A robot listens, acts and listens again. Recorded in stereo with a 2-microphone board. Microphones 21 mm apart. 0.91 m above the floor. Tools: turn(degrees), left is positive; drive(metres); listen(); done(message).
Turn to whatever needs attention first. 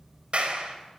listen()
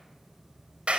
listen()
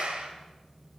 done("I can't make out anything urgent to turn to.")